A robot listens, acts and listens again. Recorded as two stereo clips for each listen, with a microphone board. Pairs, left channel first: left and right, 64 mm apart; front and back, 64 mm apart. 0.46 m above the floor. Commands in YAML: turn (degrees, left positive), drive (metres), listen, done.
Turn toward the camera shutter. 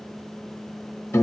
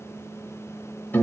listen: true
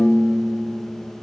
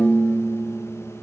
listen: true
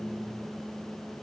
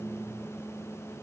done: "I can't make out a camera shutter to turn to."